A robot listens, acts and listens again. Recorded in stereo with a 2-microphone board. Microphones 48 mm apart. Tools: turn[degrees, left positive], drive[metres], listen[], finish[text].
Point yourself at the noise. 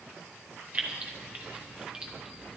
Action: turn[-30]
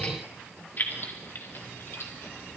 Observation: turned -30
Thought: So it is at 60° left.
Action: turn[60]
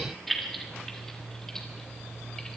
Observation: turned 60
Thought: The keys jangling is now 15° left.
Action: turn[15]
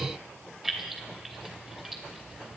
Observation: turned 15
Action: finish[Facing the keys jangling, 2 to 4 m away.]